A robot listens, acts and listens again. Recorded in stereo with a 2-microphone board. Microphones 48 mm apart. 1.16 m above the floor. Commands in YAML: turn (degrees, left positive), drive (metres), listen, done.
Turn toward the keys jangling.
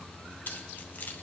turn: 40
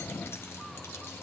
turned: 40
listen: true
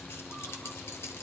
turn: 90
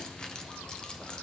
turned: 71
turn: 20
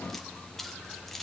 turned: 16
done: "Found it: keys jangling, straight ahead, under 1 m away."